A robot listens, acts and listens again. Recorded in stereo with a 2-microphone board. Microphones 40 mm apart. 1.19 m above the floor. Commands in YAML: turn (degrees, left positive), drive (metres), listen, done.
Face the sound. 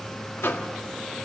turn: 90
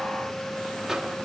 listen: true
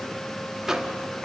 turn: -10
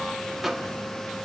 done: "Facing the microwave."